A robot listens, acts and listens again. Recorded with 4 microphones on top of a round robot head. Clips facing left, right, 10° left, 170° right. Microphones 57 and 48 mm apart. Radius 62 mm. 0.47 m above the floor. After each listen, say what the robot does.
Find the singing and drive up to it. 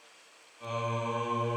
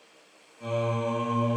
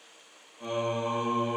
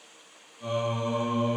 Turn 10° right.
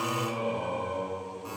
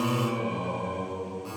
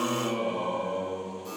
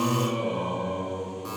Drive 1.0 m forward.
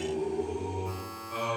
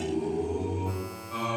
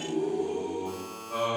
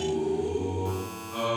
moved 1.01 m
Drive 1.0 m forward.
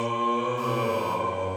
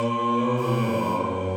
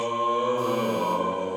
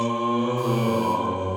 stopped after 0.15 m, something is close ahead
Arrived at the singing, straight ahead.